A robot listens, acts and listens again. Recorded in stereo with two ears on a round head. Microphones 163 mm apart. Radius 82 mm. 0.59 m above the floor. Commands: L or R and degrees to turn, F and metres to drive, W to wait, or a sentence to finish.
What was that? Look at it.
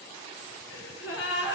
L70
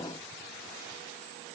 W
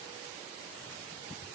I heard a gasp, but can't make it out now. It was about straight ahead or 40° left.